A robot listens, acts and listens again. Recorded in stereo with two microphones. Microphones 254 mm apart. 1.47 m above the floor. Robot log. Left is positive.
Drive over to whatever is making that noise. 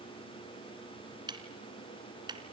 note: The ticking: about 15° right or 165° right.
cmd yaw -15
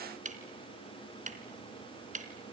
note: So it is at 150° right.
cmd yaw -150
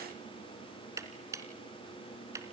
note: The ticking is now 15° right.
cmd yaw -15
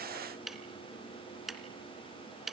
cmd fwd 1.0
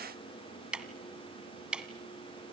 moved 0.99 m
cmd fwd 1.0
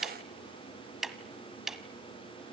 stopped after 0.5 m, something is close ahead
end: Arrived at the ticking, straight ahead.